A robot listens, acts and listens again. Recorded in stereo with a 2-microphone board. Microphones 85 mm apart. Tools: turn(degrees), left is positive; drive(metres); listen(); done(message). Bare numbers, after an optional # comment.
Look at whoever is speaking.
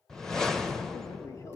# The man speaking: about 35° left or 145° left.
turn(35)
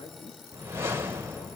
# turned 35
# So it is at 110° left.
turn(110)
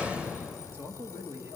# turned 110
# The man speaking is now 25° right.
turn(-25)
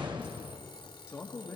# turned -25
# The man speaking is now 25° left.
turn(25)
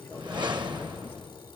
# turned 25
# The man speaking is now 20° left.
turn(20)
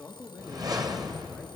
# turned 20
done("Facing the man speaking.")